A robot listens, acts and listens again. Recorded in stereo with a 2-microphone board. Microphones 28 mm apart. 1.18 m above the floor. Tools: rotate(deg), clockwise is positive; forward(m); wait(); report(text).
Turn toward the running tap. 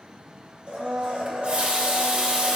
rotate(50)
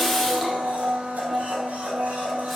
report("Facing the running tap.")